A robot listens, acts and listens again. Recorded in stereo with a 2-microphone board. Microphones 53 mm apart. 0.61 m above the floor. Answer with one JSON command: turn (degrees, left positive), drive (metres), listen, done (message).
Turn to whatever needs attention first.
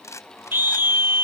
{"turn": -45}
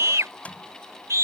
{"turn": -90}
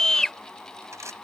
{"turn": 10}
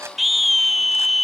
{"done": "Found it: a scream, straight ahead."}